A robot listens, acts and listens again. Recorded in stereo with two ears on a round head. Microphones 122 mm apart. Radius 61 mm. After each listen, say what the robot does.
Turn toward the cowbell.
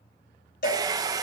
Turn 70° left.
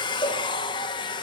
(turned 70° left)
Keep listening.
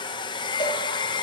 Keep listening.
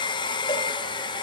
I heard a cowbell, but can't make it out now. It was about straight ahead or 40° left.